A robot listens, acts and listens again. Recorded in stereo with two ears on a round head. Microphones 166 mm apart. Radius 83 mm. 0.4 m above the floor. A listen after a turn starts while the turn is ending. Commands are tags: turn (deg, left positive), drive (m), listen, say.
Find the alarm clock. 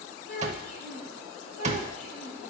<turn deg="-35"/>
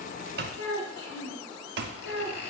<turn deg="-100"/>
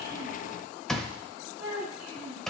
<say>Found it: an alarm clock, straight ahead.</say>